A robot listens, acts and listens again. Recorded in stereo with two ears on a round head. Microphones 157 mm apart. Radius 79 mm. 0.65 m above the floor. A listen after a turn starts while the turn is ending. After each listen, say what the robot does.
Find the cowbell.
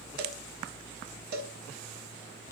Turn 60° right.
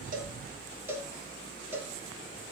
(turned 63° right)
Turn 15° right.
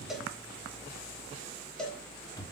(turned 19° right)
Found it: a cowbell, straight ahead, 1 to 2 m away.